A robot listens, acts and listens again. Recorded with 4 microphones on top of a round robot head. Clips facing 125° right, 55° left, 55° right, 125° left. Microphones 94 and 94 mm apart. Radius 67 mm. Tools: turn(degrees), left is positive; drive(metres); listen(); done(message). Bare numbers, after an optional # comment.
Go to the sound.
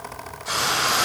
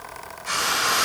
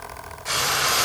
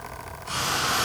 # The frying: 55° right.
turn(-55)
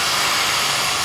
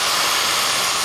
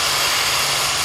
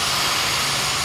# The frying is now 20° right.
turn(-20)
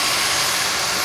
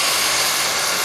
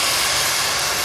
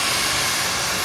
drive(1.0)
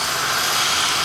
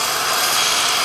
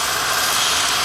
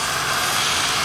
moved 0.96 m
drive(1.0)
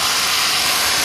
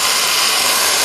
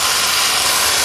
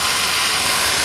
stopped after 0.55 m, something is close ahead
done("Arrived at the frying, straight ahead.")